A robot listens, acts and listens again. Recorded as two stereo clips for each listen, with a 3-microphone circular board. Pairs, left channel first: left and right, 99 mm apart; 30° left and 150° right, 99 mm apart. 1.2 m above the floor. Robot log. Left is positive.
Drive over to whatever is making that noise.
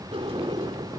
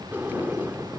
note: The sliding door: 80° right.
cmd yaw -80
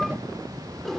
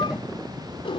cmd fwd 1.0
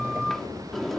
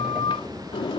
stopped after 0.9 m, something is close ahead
end: Blocked. The sliding door is further on, straight ahead.